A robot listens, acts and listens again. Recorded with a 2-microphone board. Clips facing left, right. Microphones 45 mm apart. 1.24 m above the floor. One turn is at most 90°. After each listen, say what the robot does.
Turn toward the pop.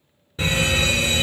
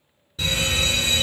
Keep listening.
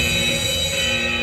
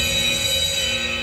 Keep listening.
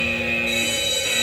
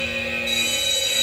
I can't make out a pop to turn to.